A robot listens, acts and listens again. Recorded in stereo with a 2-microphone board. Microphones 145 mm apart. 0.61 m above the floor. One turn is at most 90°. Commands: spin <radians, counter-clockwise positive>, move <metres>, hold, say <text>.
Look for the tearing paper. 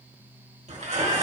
spin -0.96
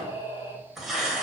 say Facing the tearing paper, 1 to 2 m away.